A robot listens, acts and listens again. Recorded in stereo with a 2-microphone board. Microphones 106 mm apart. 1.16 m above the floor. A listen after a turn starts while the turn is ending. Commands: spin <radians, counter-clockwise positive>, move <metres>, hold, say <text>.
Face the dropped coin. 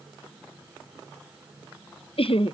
hold
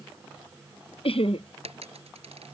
spin -1.22
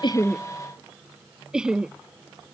hold
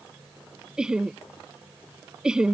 say I heard a dropped coin, but can't make it out now. It was about straight ahead or 40° right.